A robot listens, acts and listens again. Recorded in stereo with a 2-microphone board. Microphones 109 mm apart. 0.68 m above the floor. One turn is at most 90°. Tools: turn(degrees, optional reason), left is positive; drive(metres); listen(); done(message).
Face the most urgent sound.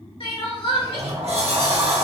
turn(degrees=55, reason="The crying: about 55° left or 125° left.")
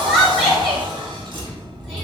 done("Facing the crying, 1 to 2 m away.")